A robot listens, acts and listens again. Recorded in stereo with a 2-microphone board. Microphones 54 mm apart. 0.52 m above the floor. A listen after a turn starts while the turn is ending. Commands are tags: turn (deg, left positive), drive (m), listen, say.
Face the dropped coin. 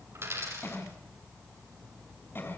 <turn deg="-55"/>
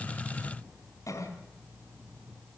<listen/>
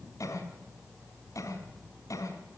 <say>I heard a dropped coin, but can't make it out now. It was about straight ahead or 70° right.</say>